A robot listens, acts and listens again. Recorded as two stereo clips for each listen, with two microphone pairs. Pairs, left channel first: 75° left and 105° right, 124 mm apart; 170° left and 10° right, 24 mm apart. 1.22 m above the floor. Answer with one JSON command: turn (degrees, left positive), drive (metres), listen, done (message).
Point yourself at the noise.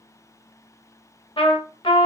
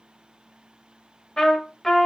{"turn": 120}
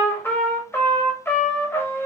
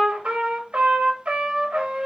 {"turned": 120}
{"done": "Found it: a trumpet, straight ahead, 1 to 2 m away."}